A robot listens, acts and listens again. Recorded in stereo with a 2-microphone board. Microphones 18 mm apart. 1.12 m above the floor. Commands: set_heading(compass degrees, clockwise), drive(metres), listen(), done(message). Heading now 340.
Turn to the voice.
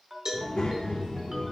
set_heading(250)
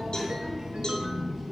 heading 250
done("Found it: a child speaking, straight ahead, 1 to 2 m away.")